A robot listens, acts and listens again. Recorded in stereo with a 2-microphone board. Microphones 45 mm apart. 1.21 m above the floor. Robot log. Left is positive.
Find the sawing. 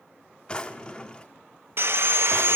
note: The sawing: about 60° right or 120° right.
cmd yaw -60
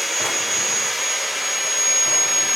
end: Found it: sawing, straight ahead.